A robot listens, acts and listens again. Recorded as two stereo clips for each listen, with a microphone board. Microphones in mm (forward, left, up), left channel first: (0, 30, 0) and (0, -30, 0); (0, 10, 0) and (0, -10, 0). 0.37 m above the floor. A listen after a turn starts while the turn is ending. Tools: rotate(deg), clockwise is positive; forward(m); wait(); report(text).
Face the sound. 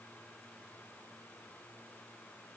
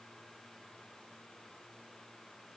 wait()
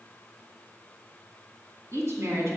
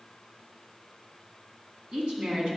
rotate(50)
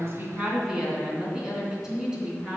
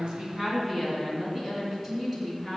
rotate(15)
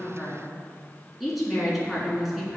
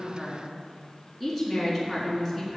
report("Found it: a woman speaking, straight ahead, 2 to 4 m away.")